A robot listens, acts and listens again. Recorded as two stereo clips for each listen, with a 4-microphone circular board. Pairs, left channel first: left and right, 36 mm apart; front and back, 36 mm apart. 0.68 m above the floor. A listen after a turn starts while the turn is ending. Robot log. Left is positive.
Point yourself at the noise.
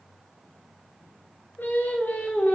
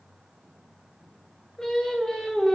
note: The singing: 75° left.
cmd yaw +75
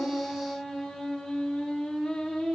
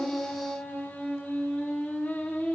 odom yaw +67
note: The singing is now 30° left.
cmd yaw +30
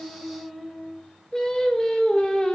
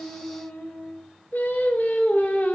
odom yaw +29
note: The singing is now 25° left.
cmd yaw +25
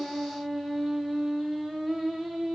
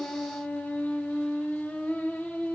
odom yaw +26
end: Facing the singing.